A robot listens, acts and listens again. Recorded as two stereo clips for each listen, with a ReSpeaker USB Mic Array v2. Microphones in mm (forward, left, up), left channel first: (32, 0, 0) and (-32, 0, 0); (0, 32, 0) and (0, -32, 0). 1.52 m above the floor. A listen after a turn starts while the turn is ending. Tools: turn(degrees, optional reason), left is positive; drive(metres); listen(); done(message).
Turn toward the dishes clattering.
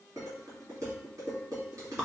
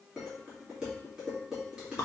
turn(degrees=-165, reason="The dishes clattering: 165° right.")
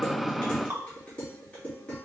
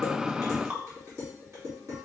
turn(degrees=-65, reason="The dishes clattering is now 65° right.")
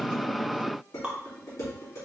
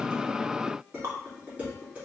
turn(degrees=-25, reason="The dishes clattering is now 25° right.")
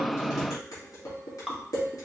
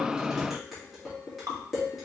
done("Facing the dishes clattering.")